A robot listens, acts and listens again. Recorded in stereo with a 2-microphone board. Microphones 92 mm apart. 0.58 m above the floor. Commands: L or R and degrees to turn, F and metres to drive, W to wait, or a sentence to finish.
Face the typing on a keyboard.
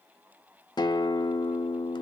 W
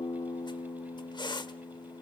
W
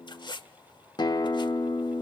I can't make out typing on a keyboard, only a guitar and a squeak.